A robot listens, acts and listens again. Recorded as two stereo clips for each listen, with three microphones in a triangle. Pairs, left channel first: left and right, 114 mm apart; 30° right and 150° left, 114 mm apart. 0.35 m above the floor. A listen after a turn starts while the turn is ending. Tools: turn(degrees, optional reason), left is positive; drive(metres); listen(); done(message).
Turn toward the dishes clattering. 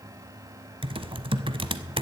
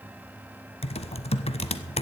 listen()
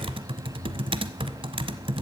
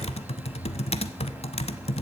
listen()
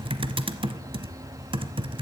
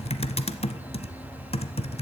done("I can't make out dishes clattering to turn to.")